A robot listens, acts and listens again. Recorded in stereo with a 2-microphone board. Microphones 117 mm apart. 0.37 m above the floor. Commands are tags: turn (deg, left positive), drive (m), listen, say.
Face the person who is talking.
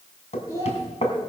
<turn deg="30"/>
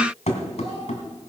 <listen/>
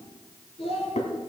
<turn deg="120"/>
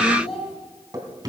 <say>Facing the child speaking.</say>